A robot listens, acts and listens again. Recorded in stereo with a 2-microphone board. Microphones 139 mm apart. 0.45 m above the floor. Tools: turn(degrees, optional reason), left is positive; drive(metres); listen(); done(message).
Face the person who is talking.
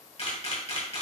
listen()
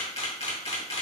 listen()
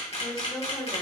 turn(degrees=30)
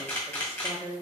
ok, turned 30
turn(degrees=-25, reason="So it is at 25° right.")
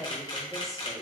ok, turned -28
done("Found it: a woman speaking, straight ahead, 1 to 2 m away.")